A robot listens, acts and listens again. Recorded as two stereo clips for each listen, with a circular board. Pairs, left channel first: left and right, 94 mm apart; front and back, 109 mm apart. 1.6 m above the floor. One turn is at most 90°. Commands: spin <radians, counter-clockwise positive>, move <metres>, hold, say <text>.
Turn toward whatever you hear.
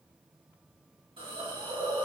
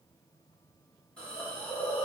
spin -1.40
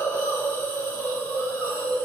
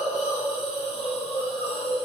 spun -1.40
spin 0.35
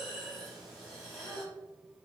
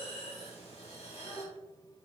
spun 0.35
say Facing the hiss, 1 to 2 m away.